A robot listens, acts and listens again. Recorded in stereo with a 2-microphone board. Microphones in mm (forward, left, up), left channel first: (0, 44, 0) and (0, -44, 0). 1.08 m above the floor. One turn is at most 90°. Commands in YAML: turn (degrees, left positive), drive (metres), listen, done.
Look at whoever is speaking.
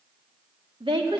turn: -90
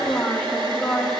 done: "Found it: a woman speaking, straight ahead."